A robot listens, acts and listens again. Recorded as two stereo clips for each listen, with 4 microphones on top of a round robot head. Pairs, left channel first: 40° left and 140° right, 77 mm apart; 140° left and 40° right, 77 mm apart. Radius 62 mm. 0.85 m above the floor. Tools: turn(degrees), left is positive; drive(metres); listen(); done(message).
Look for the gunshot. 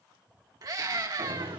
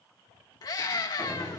turn(degrees=-135)
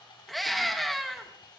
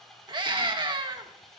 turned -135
done("I heard a gunshot from this way, but can't make it out now.")